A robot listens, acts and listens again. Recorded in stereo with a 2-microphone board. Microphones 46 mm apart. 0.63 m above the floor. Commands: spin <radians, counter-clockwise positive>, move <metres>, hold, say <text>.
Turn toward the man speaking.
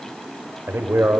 spin -1.05
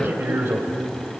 spin -0.96
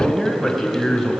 say Facing the man speaking.